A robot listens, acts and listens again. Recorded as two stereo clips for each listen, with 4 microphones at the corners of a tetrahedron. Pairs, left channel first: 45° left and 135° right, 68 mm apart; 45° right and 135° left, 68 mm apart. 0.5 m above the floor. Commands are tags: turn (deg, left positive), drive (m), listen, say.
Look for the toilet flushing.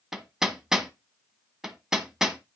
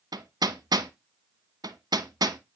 <listen/>
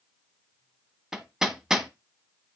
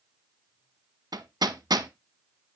<listen/>
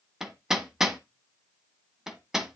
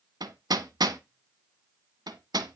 <say>I can't make out a toilet flushing, only hammering.</say>